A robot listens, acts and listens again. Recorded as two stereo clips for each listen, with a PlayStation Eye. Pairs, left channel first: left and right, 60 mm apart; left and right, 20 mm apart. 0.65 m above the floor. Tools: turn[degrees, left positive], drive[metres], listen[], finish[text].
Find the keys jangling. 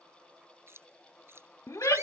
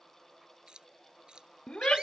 Thought: The keys jangling: about 45° right or 135° right.
Action: turn[-45]
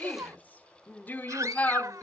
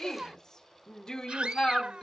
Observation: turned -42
Action: listen[]
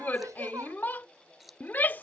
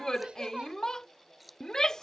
Action: finish[Facing the keys jangling.]